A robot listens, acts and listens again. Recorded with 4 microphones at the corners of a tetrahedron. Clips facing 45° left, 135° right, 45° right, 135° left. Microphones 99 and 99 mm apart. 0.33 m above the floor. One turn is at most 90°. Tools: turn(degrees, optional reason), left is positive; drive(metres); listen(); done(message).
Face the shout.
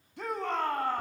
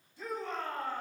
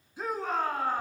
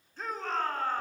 turn(degrees=35, reason="The shout: 35° left.")
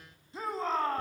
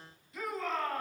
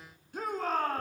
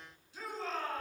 turn(degrees=-15, reason="The shout is now 15° right.")
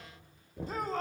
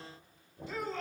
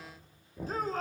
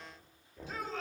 done("Found it: a shout, straight ahead, 2 to 4 m away.")